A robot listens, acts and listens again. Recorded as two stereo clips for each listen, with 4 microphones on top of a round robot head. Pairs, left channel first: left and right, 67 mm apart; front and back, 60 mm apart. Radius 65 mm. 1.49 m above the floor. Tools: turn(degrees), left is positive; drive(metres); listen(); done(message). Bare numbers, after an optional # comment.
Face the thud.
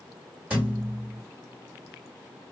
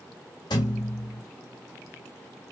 # The thud: 20° right.
turn(-20)
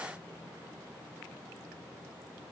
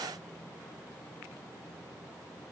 done("Facing where the thud came from. I can't hear it now.")